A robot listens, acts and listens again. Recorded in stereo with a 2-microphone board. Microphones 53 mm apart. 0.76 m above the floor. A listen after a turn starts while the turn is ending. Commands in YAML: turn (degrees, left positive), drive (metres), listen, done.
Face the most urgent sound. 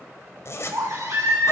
turn: -90
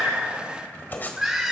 turn: -10
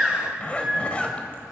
done: "Facing the baby crying, 2 to 4 m away."